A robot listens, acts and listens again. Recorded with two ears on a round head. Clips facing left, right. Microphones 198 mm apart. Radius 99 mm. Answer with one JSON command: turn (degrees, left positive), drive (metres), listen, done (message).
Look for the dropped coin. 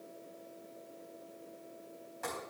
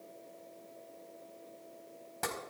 {"listen": true}
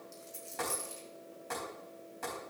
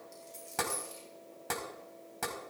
{"turn": 30}
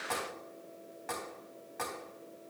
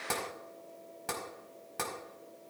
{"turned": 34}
{"listen": true}
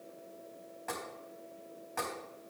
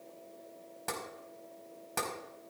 {"done": "I heard a dropped coin, but can't make it out now. It was about 25° right or 135° left."}